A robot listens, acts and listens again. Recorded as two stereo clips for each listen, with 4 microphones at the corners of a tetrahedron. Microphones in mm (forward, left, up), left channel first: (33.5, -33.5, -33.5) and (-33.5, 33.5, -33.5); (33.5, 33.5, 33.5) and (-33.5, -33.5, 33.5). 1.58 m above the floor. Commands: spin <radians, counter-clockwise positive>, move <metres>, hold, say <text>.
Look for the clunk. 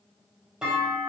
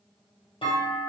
spin 0.96
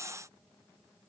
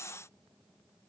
say I heard a clunk from this way, but can't make it out now.